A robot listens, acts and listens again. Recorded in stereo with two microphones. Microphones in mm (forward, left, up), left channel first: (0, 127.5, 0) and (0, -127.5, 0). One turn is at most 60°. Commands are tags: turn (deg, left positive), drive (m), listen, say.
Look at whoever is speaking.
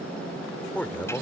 <turn deg="30"/>
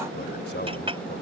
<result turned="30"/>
<turn deg="60"/>
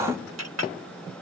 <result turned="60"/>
<turn deg="60"/>
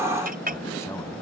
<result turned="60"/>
<turn deg="20"/>
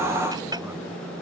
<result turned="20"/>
<say>Facing where the man speaking came from. I can't hear it now.</say>